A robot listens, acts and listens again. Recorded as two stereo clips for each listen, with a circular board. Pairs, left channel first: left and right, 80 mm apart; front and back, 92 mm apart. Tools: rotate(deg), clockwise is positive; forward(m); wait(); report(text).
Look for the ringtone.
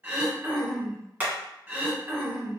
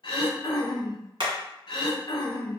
wait()
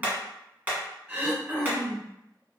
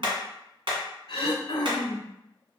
wait()
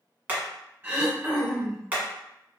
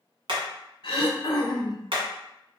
report("I can't make out a ringtone, only hammering and throat clearing.")